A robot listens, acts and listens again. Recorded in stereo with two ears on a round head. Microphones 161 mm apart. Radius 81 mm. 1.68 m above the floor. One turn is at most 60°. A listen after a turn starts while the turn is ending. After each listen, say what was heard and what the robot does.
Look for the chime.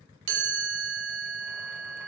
The chime: about 65° right or 115° right. Turn 60° right.
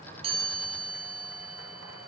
So it is at 10° right. Turn 10° right.
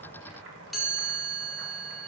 Facing the chime.